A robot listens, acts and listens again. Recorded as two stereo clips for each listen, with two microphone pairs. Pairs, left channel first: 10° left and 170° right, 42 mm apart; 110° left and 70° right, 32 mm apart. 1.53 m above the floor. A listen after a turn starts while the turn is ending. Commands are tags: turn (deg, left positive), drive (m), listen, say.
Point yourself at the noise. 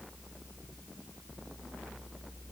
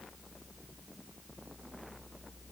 <listen/>
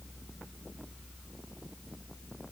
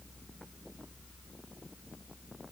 <listen/>
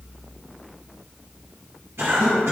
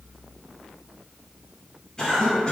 <turn deg="175"/>
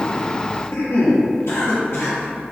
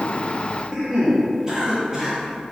<say>Facing the cough.</say>